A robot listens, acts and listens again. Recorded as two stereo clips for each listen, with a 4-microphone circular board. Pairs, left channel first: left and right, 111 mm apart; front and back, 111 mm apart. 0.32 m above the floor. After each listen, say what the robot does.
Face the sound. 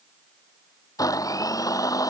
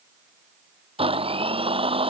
Turn 145° left.
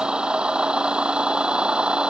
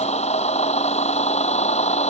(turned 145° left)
Turn 10° right.
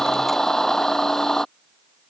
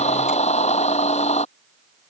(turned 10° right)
Found it: a blender, straight ahead.